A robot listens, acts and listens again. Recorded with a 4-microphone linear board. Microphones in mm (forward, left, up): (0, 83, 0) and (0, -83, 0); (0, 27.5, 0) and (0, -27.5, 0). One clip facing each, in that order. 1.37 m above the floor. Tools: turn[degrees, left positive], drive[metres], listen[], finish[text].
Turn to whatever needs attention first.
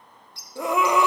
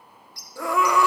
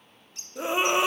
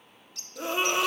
Thought: The scream: about 20° left or 160° left.
Action: turn[20]
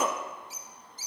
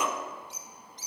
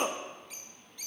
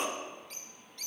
Thought: So it is at 135° left.
Action: turn[135]
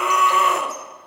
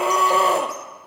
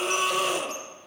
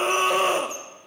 Thought: The scream is now 35° right.
Action: turn[-35]
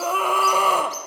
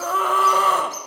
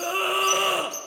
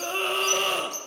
Thought: The scream is now 10° left.
Action: turn[10]
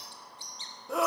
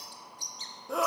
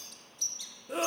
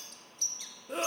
Action: finish[Found it: a scream, straight ahead.]